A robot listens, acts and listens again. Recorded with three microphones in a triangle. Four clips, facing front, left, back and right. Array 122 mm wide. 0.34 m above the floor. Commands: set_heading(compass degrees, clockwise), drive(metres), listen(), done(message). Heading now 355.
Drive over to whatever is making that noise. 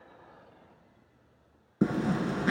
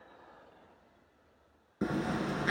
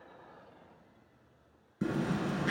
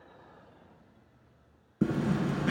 set_heading(5)
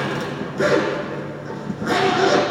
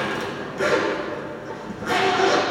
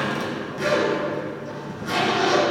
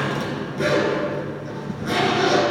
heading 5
drive(1.0)
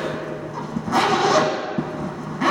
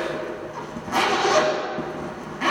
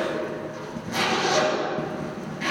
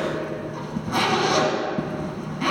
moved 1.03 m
drive(1.0)
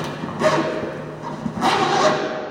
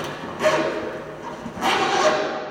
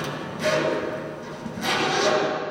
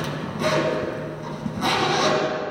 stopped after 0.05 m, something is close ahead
done("I am next to the zipper.")